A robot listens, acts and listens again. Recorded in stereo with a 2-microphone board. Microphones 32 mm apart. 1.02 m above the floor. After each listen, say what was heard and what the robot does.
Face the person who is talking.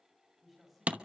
Turn 30° right.
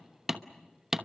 Keep listening.
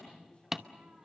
Keep listening.
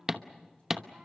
I heard a man speaking, but can't make it out now. It was about 25° left or 145° right.